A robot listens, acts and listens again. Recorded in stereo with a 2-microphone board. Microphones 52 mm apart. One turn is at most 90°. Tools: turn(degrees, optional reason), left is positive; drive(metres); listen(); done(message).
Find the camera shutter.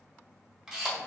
turn(degrees=-30)
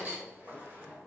turn(degrees=-90, reason="So it is at 140° right.")
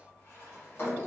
turn(degrees=-50, reason="Nothing new. It was at 50° right.")
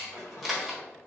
done("Found it: a camera shutter, straight ahead, 1 to 2 m away.")